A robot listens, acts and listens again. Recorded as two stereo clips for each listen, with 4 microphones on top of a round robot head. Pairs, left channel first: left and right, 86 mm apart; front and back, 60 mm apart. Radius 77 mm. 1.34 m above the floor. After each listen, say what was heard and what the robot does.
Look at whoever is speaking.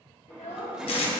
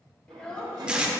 The child speaking: 65° left. Turn 65° left.
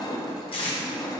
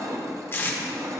Keep listening.
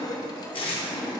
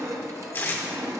Keep listening.
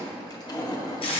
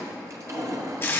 I heard a child speaking from this way, but can't make it out now.